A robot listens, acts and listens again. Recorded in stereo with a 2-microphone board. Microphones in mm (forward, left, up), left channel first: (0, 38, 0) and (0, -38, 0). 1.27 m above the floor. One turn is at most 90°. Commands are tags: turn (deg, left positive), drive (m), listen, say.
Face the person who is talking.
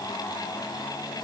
<listen/>
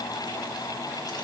<listen/>
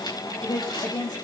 <turn deg="60"/>
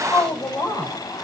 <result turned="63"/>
<turn deg="55"/>
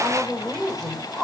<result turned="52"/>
<say>Facing the woman speaking, 2 to 4 m away.</say>